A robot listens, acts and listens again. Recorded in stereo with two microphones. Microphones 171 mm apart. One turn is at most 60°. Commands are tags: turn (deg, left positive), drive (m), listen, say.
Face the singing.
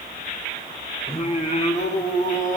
<turn deg="50"/>
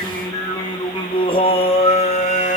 <turn deg="45"/>
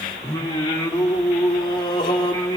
<turn deg="25"/>
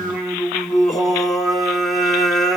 <say>Found it: singing, straight ahead.</say>